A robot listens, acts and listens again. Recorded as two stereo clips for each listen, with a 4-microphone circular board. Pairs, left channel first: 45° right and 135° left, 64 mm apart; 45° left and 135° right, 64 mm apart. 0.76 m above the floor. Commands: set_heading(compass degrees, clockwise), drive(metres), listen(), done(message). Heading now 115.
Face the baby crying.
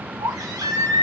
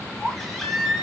set_heading(345)
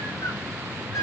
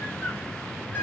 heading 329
set_heading(344)
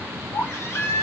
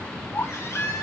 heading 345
done("Found it: a baby crying, straight ahead, 1 to 2 m away.")